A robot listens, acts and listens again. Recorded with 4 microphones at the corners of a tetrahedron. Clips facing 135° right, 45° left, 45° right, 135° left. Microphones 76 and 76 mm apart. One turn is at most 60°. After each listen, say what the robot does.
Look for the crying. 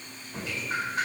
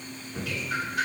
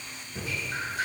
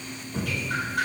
Keep listening.
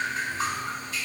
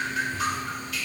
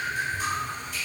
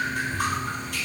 Keep listening.
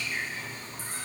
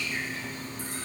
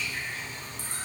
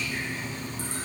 I can't make out crying to turn to.